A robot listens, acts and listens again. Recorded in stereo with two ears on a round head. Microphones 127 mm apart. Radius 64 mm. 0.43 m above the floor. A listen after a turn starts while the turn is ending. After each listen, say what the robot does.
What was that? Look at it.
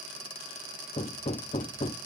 Turn 40° left.
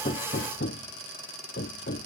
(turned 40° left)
Turn 95° left.
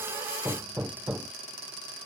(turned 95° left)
Turn 10° right.
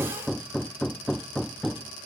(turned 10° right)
Found it: hammering, straight ahead.